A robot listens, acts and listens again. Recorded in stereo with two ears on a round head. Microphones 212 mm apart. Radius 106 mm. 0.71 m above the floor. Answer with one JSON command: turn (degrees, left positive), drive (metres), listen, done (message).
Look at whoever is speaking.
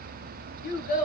{"turn": 35}
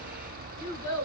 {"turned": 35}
{"turn": 110}
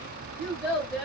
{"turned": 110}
{"done": "Facing the child speaking, 2 to 4 m away."}